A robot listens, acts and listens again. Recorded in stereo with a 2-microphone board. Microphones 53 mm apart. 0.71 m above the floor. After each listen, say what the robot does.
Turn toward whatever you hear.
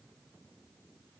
Keep listening.
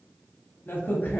Turn 40° left.
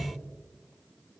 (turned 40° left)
Turn 95° left.
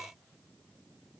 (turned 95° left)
I heard a crack from this way, but can't make it out now.